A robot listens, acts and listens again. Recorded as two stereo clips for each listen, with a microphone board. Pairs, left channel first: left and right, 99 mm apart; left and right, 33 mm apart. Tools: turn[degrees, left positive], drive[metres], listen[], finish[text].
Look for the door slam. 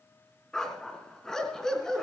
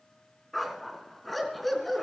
Action: listen[]
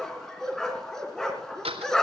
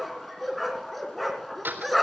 Action: turn[-90]
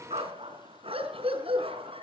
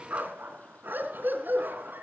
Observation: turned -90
Action: finish[I heard a door slam from this way, but can't make it out now.]